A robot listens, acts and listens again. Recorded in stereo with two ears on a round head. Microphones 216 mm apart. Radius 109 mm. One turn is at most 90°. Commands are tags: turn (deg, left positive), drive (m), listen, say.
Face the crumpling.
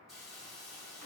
<listen/>
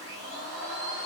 <listen/>
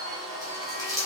<turn deg="-30"/>
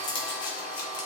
<turn deg="20"/>
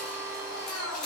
<say>Facing the crumpling, 1 to 2 m away.</say>